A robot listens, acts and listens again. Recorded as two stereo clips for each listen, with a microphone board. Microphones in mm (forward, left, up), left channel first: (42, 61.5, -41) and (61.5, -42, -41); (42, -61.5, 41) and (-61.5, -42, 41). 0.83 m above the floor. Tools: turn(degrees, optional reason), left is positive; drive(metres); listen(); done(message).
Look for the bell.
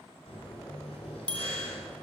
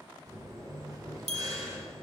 turn(degrees=180, reason="The bell: straight behind.")
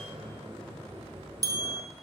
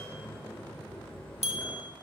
turn(degrees=-25, reason="The bell is now 25° right.")
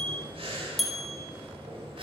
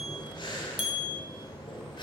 turn(degrees=10, reason="The bell is now 10° left.")
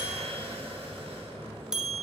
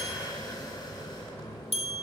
done("Facing the bell.")